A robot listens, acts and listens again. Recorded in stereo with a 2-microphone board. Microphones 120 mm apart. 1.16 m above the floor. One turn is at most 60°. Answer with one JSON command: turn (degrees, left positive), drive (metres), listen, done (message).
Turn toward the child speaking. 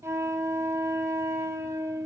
{"listen": true}
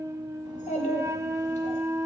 {"turn": 60}
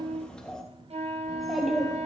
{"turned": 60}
{"done": "Facing the child speaking, 2 to 4 m away."}